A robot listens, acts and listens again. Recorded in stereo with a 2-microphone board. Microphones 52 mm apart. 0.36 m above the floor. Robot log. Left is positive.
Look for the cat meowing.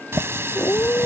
cmd yaw +90
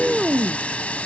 end: Found it: a cat meowing, straight ahead.